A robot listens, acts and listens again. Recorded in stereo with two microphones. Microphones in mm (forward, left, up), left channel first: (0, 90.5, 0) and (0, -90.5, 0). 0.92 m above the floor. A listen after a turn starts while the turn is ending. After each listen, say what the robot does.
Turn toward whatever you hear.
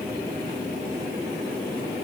Keep listening.
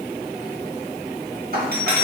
Turn 60° right.
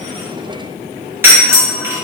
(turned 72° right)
Turn 15° right.
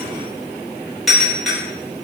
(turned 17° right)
Found it: a doorbell, straight ahead, 1 to 2 m away.